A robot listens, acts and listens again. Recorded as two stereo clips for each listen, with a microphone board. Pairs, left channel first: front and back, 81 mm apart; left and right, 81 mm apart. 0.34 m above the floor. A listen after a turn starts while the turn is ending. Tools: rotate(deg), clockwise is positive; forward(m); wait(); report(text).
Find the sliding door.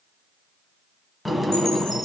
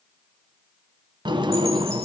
rotate(90)
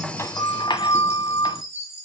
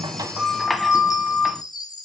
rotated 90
report("Found it: a sliding door, straight ahead, under 1 m away.")